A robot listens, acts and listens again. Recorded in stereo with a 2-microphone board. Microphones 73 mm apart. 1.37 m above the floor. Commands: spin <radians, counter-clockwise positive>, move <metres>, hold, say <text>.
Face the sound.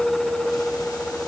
hold
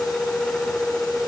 hold
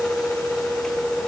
say I can't make out anything to turn to.